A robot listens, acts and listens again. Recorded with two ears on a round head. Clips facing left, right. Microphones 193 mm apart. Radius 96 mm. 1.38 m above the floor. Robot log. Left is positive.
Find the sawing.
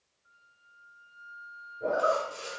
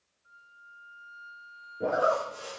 note: The sawing: about 35° left or 145° left.
cmd yaw +35
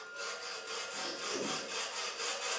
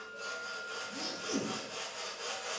note: So it is at 105° left.
cmd yaw +105
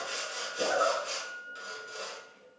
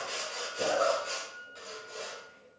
note: The sawing is now 15° left.
cmd yaw +15
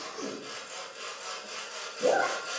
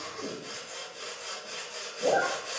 end: Facing the sawing, over 4 m away.